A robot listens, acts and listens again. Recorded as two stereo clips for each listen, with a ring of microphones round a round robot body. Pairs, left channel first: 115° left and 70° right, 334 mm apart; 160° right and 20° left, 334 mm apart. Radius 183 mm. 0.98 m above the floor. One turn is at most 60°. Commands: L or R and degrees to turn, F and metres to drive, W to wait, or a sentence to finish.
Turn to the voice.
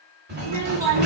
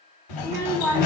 R60
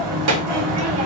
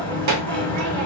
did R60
R20
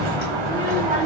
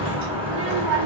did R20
Facing the child speaking.